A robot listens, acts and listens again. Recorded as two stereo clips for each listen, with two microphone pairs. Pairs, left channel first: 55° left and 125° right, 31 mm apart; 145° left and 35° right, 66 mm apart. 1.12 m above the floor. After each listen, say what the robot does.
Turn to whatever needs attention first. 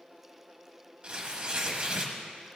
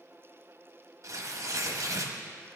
Keep listening.
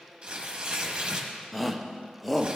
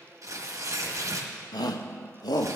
Turn 150° left.
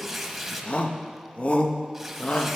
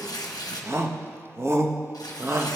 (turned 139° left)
Turn 10° left.
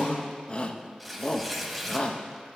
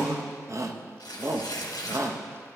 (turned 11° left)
Facing the shout, under 1 m away.